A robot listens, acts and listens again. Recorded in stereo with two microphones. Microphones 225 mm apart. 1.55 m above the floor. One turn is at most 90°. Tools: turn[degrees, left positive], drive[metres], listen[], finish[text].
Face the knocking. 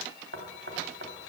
Thought: The knocking: about 55° right or 125° right.
Action: turn[-55]
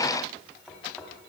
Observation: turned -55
Action: finish[Found it: knocking, straight ahead, 2 to 4 m away.]